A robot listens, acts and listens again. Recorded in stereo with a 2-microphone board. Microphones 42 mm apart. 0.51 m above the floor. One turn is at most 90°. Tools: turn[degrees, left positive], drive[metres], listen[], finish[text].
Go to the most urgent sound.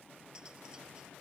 Action: listen[]
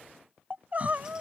Thought: The crying: about 40° right or 140° right.
Action: turn[-40]
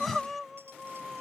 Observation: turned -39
Action: drive[1.0]
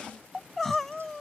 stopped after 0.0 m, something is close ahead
Action: finish[Something is in my way. I am facing the crying but have not reached it.]